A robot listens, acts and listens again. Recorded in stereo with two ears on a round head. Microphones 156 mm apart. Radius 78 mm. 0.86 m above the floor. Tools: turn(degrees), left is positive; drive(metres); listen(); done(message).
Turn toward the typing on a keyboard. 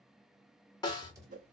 turn(degrees=-20)
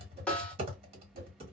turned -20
turn(degrees=-140)
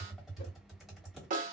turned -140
done("Facing the typing on a keyboard.")